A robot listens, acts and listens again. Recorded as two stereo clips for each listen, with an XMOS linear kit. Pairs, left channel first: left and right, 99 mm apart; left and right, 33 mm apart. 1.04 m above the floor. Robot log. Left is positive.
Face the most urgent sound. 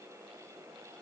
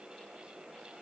cmd idle
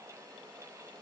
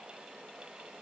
cmd idle
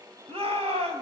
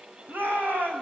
cmd yaw -90
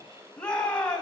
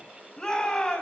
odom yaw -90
note: So it is at 10° left.
cmd yaw +10
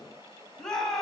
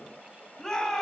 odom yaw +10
end: Found it: a shout, straight ahead.